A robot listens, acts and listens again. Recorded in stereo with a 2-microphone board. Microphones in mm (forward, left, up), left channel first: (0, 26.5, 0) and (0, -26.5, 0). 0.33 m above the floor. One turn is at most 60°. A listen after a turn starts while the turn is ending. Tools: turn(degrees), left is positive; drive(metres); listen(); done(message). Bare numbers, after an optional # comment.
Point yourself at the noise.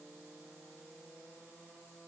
listen()
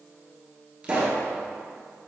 # The pop: about 15° right or 165° right.
turn(-15)
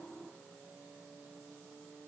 listen()
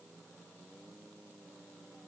done("I heard a pop, but can't make it out now. It was about straight ahead or 150° right.")